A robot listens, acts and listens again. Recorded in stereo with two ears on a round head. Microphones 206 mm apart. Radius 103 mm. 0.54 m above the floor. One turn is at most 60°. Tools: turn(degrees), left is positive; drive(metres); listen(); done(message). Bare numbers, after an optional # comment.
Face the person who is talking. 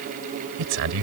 # The man speaking: about 55° right or 125° right.
turn(-55)
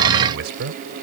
# So it is at 55° right.
turn(-55)
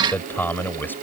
# The man speaking is now 10° left.
turn(10)
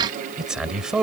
done("Found it: a man speaking, straight ahead.")